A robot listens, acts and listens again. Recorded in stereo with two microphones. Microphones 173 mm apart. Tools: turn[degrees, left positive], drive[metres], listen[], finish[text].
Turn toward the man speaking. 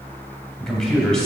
Action: turn[30]
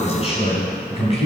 Thought: So it is at 140° left.
Action: turn[140]
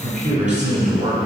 Thought: The man speaking is now 45° right.
Action: turn[-45]
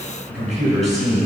Action: finish[Facing the man speaking, over 4 m away.]